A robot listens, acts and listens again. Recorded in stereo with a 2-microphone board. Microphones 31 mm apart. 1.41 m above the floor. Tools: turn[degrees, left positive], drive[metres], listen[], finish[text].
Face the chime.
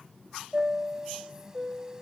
Thought: The chime: about 20° right or 160° right.
Action: turn[-20]
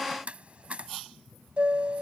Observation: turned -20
Thought: So it is at 140° right.
Action: turn[-140]
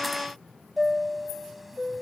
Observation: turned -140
Action: finish[Facing the chime.]